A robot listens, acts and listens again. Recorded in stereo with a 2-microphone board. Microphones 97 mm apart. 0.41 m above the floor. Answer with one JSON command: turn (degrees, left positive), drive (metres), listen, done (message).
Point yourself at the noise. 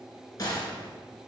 {"turn": 45}
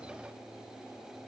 {"listen": true}
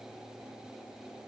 {"done": "I heard a gunshot, but can't make it out now. It was about straight ahead or 90° left."}